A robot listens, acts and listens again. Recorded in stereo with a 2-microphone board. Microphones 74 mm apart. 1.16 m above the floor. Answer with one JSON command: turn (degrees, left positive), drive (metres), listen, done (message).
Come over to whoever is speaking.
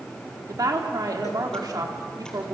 {"turn": -55}
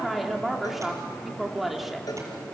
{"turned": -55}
{"drive": 1.0}
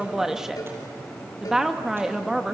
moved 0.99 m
{"drive": 1.0}
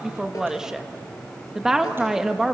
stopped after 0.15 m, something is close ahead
{"done": "I am next to the woman speaking."}